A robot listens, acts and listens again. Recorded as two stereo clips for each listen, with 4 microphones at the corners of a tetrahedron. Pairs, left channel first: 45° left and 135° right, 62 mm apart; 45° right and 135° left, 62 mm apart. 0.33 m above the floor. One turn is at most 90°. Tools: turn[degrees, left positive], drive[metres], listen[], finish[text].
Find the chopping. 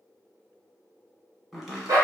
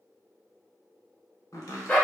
Thought: The chopping: 45° right.
Action: turn[-45]
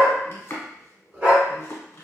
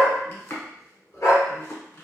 Action: finish[Found it: chopping, straight ahead, under 1 m away.]